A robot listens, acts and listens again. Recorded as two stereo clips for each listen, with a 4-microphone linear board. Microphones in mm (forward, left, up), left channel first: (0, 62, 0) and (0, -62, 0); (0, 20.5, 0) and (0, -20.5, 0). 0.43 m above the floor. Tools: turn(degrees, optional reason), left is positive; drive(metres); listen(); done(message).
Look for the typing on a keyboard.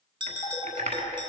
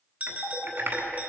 turn(degrees=-90)
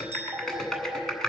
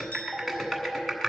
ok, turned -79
done("Facing the typing on a keyboard.")